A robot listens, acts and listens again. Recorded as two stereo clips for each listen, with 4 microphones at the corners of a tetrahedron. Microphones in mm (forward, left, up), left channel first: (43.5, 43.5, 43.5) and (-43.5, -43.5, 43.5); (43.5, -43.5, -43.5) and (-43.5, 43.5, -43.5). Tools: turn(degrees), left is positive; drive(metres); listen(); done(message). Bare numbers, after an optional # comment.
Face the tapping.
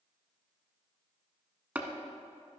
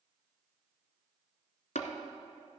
# The tapping: 60° right.
turn(-60)
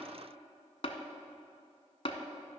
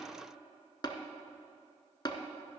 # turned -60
# The tapping is now 10° left.
turn(10)
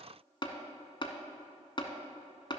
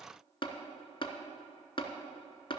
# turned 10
done("Facing the tapping.")